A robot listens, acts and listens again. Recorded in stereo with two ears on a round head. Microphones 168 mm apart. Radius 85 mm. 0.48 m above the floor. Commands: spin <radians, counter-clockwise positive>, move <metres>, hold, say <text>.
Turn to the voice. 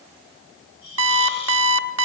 hold
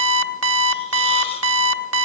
hold
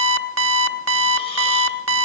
say I can't make out anyone speaking to turn to.